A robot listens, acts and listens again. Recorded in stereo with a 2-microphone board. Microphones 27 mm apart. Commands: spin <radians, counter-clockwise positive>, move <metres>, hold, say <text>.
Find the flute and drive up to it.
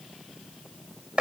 hold
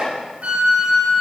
spin -0.96
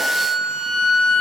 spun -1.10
move 1.0
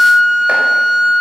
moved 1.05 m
spin 0.17
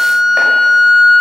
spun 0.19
move 1.0
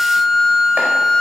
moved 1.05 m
move 1.0
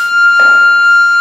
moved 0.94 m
move 1.0
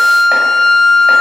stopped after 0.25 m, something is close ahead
say Arrived at the flute, straight ahead.